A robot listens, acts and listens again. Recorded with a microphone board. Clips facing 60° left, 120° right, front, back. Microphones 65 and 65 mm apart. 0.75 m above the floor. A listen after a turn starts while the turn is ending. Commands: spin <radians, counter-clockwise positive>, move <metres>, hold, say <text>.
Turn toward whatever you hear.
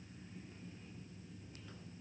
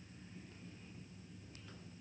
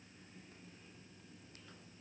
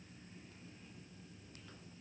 hold
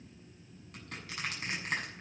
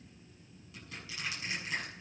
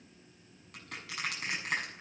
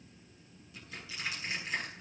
spin 0.44
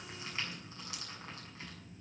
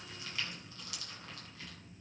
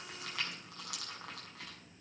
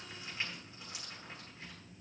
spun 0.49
say Found it: crushing, straight ahead, over 4 m away.